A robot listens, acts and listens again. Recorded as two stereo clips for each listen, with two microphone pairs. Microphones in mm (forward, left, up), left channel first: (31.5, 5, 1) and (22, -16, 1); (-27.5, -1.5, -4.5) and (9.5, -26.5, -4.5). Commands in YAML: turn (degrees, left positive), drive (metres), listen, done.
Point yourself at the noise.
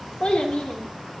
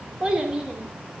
turn: 40
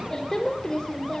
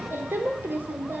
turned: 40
done: "Found it: a child speaking, straight ahead."